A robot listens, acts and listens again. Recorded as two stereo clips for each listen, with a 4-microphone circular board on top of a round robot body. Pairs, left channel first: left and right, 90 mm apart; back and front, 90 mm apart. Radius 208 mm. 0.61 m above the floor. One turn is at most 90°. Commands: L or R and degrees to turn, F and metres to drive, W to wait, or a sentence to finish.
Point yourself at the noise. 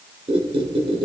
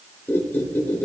R90
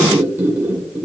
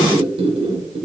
R20
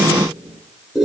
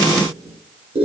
Found it: a squeak, straight ahead, 1 to 2 m away.